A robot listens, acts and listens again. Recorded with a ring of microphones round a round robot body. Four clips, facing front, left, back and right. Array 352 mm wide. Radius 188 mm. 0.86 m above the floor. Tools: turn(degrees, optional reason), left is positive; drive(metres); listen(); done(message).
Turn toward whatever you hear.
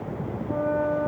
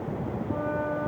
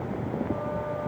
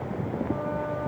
turn(degrees=10, reason="The flute: 10° left.")
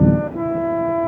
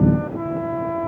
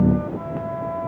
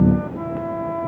done("Facing the flute.")